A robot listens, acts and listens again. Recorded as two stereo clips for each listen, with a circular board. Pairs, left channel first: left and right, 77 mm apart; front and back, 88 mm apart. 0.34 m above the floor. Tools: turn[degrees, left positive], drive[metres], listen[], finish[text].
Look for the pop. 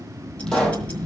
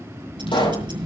Thought: The pop: 10° left.
Action: turn[10]
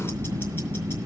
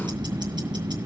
Action: finish[Facing where the pop came from. I can't hear it now.]